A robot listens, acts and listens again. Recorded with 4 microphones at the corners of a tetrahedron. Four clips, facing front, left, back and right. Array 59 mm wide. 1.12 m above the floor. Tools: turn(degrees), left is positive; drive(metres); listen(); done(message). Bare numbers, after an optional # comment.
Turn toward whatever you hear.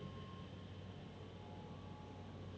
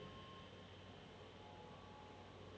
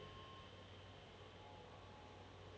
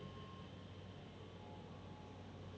listen()
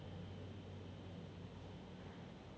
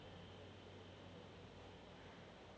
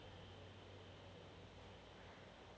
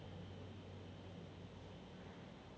listen()
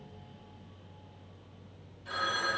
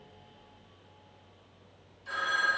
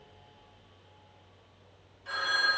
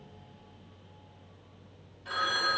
# The phone ringing: 120° right.
turn(-120)
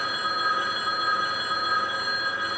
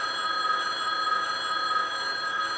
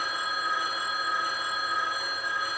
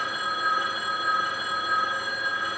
done("Found it: a phone ringing, straight ahead.")